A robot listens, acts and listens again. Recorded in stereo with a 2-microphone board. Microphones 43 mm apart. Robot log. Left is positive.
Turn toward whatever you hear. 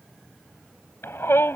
cmd yaw +90
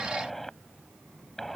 cmd idle
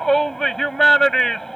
note: The shout is now 10° left.
cmd yaw +10
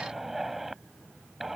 end: Facing the shout.